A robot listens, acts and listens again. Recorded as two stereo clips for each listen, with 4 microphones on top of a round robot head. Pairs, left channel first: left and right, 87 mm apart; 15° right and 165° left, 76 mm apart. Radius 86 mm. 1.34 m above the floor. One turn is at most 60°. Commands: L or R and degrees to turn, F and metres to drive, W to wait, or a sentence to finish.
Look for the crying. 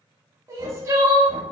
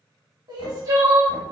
R60
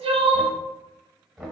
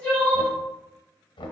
R60
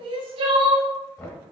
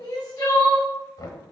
R60
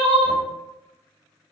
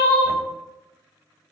Facing the crying, under 1 m away.